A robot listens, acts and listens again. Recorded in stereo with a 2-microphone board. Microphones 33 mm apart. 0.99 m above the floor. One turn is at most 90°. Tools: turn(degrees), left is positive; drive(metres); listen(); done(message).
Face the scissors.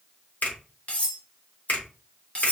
listen()
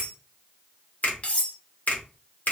listen()
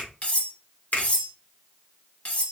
done("I can't make out scissors, only a finger snap and cutlery clinking.")